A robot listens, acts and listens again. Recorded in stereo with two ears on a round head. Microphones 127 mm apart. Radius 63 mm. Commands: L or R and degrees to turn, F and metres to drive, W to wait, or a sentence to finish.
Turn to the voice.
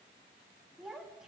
R30
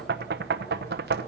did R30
W
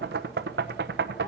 W
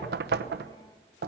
I heard a child speaking, but can't make it out now. It was about 25° left or 145° right.